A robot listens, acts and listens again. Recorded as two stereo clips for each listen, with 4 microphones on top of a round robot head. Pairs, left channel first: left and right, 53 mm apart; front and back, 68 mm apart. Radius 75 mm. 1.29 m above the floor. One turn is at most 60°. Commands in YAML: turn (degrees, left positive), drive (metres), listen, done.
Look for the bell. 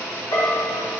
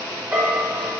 turn: 60
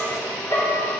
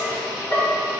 turn: 55
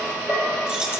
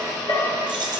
turn: -15
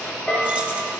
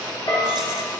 turn: -10
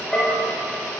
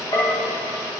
done: "Facing the bell, 2 to 4 m away."